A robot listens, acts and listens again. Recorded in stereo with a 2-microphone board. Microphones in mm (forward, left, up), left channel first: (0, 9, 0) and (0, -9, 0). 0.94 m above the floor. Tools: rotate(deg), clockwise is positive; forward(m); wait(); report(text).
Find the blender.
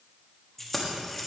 wait()
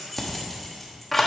wait()
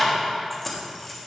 report("I can't make out a blender to turn to.")